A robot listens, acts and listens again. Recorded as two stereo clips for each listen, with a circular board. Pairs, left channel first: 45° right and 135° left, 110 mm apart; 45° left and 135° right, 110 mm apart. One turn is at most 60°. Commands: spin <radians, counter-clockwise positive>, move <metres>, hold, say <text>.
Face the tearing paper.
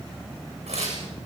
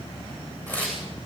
spin 1.05
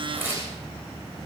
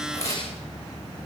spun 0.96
spin 1.05
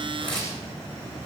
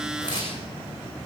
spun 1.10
say Facing the tearing paper, over 4 m away.